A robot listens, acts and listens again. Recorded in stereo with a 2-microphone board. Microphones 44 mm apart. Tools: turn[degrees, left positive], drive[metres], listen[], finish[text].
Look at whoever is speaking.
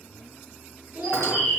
Thought: The child speaking: about 40° right or 140° right.
Action: turn[-40]
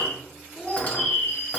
Action: finish[Found it: a child speaking, straight ahead, under 1 m away.]